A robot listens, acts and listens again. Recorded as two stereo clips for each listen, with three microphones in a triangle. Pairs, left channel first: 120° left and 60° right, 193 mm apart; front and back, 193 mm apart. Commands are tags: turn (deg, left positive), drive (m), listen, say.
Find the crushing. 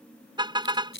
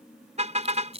<turn deg="125"/>
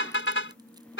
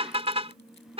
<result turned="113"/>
<turn deg="10"/>
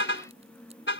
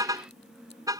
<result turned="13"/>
<listen/>
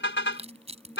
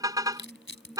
<say>Facing the crushing.</say>